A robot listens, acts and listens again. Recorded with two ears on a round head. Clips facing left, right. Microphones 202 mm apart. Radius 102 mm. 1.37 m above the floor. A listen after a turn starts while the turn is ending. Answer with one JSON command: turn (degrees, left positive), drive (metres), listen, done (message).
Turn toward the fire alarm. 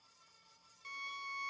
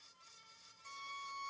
{"listen": true}
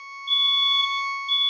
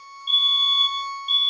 {"turn": -25}
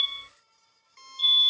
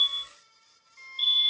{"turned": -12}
{"turn": -15}
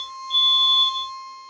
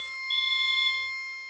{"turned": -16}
{"done": "Found it: a fire alarm, straight ahead, 1 to 2 m away."}